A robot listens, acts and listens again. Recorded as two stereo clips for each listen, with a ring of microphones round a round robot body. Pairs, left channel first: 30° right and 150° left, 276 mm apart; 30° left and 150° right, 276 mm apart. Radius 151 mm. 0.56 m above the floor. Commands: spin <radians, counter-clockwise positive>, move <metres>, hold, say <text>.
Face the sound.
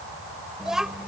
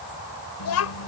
spin 1.05
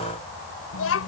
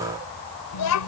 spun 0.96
spin 0.17
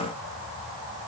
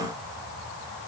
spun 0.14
hold
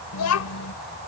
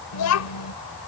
say Found it: a child speaking, straight ahead.